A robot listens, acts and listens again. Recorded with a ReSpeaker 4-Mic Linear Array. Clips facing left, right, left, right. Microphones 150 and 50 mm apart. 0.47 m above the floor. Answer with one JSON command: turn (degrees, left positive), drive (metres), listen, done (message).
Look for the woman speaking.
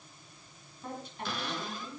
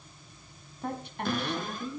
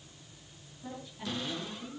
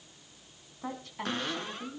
{"turn": -60}
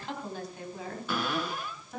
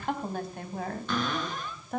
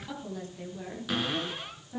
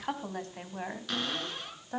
{"turn": -60}
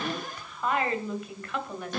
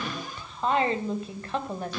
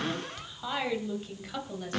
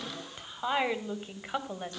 {"turn": -35}
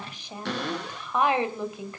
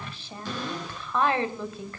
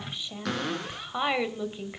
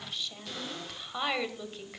{"turn": 15}
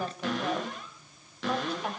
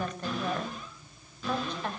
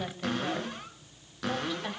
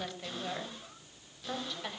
{"done": "Found it: a woman speaking, straight ahead."}